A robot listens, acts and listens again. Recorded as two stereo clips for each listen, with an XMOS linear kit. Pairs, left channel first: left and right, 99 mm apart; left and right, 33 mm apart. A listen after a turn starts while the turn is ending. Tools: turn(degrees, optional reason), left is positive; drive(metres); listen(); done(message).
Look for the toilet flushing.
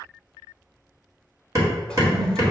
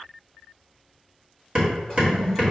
turn(degrees=30)
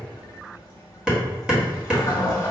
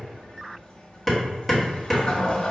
turn(degrees=140, reason="So it is at 140° left.")
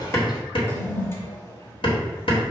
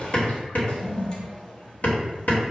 turn(degrees=35, reason="The toilet flushing is now 35° left.")
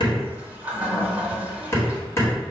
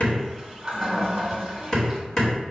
turn(degrees=-15, reason="The toilet flushing is now 15° right.")
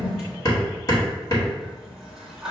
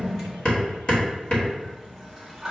done("Facing the toilet flushing, 1 to 2 m away.")